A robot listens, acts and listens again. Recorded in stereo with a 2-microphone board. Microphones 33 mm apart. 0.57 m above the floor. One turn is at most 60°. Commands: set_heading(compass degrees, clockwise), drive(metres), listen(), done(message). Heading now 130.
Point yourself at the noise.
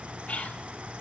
set_heading(85)
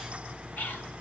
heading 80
set_heading(20)
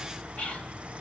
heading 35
set_heading(0)
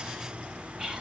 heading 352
done("Facing the whispering, 2 to 4 m away.")